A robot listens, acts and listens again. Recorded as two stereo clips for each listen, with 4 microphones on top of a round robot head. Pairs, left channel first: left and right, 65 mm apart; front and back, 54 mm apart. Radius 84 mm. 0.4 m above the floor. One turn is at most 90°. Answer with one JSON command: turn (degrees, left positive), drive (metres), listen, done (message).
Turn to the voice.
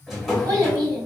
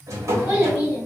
{"turn": -90}
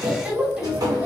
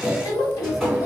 {"turn": -15}
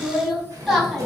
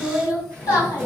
{"done": "Facing the child speaking, 1 to 2 m away."}